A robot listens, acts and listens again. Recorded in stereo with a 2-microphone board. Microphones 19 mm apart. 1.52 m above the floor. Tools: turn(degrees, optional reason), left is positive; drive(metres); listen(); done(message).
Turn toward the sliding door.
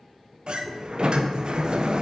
turn(degrees=-60, reason="The sliding door: about 60° right or 120° right.")
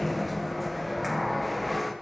done("Found it: a sliding door, straight ahead, 1 to 2 m away.")